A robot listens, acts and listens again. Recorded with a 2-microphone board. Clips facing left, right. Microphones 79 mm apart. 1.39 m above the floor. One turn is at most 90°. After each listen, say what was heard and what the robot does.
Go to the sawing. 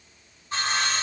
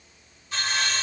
The sawing: about 40° left or 140° left. Turn 40° left.
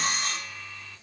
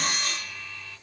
So it is at 10° left. Turn 10° left.
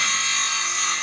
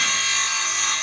Drive 1.0 m forward.
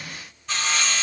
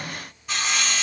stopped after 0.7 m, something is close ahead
The sawing is now 10° right. Turn 10° right.
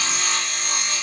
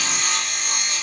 I am next to the sawing.